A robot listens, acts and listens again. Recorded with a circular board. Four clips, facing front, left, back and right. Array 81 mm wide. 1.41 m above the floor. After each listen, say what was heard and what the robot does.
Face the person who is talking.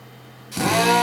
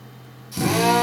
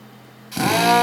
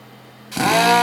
Keep listening.
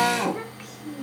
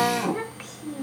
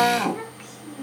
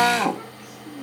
The child speaking: 85° left. Turn 85° left.
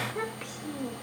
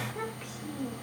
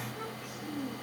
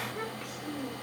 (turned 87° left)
Found it: a child speaking, straight ahead.